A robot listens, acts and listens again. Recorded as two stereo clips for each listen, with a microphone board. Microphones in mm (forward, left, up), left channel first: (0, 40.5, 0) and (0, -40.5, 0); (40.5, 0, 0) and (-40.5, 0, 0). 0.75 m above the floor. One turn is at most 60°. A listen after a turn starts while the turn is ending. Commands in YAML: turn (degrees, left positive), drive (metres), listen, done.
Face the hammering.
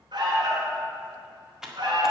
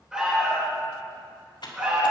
listen: true
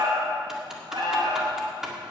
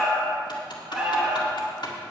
listen: true
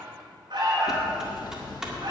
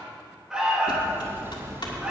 turn: 60
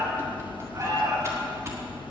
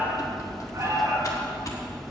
turn: 60
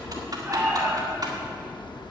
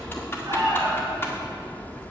turn: 60
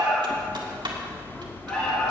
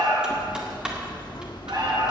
turn: 25
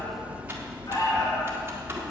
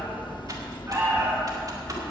turn: -20
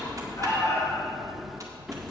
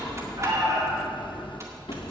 done: "Found it: hammering, straight ahead, under 1 m away."